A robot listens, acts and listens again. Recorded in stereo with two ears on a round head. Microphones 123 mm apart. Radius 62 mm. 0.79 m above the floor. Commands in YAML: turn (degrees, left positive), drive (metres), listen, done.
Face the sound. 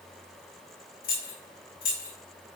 turn: 70
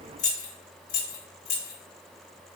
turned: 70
turn: 75
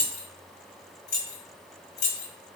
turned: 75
turn: 55
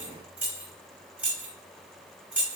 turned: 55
turn: -15
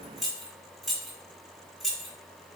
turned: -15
done: "Facing the keys jangling."